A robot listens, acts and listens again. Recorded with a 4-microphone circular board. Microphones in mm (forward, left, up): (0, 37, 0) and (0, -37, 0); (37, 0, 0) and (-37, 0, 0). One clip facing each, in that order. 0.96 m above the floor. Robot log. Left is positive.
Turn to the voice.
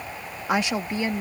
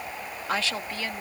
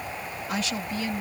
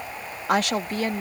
note: The woman speaking: 155° left.
cmd yaw +155
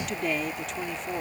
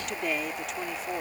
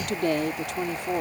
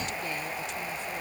end: Facing the woman speaking.